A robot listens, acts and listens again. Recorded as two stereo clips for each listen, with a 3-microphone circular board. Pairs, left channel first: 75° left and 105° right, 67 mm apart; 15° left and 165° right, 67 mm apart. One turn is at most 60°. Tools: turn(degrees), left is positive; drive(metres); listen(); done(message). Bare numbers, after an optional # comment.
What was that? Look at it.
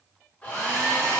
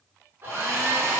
# The hair dryer: 140° left.
turn(60)
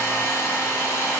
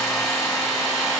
# The hair dryer is now 105° left.
turn(60)
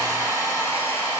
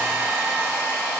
# The hair dryer is now 35° left.
turn(35)
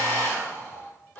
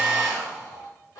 # The hair dryer is now 15° left.
turn(15)
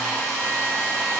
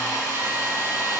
done("Found it: a hair dryer, straight ahead.")